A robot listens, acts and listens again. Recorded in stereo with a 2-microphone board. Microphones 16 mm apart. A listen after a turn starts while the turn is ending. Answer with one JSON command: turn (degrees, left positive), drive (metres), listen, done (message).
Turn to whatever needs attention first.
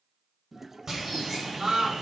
{"turn": -70}
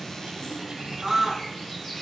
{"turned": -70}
{"done": "Found it: a scream, straight ahead, 2 to 4 m away."}